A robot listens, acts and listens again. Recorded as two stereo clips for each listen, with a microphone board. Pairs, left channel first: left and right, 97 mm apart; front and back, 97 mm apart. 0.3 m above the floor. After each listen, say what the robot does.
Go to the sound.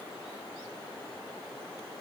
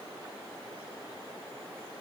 Keep listening.
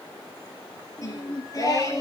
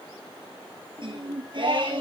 Turn 145° left.
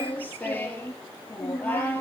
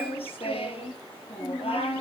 Turn 15° left.
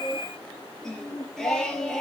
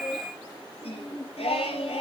Drive 1.0 m forward.
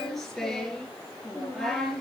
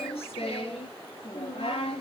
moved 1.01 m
Drive 1.0 m forward.
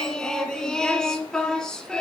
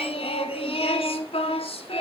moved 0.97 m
Drive 1.0 m forward.
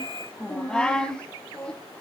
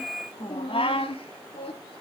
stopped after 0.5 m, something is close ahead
Turn 10° left.
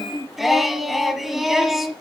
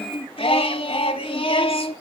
Arrived at the singing, straight ahead.